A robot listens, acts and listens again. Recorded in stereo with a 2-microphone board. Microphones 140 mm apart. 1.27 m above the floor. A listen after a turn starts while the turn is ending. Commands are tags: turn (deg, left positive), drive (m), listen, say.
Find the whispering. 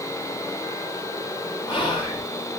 <turn deg="30"/>
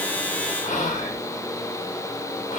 <turn deg="120"/>
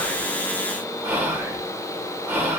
<turn deg="-10"/>
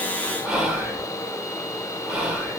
<say>Facing the whispering, under 1 m away.</say>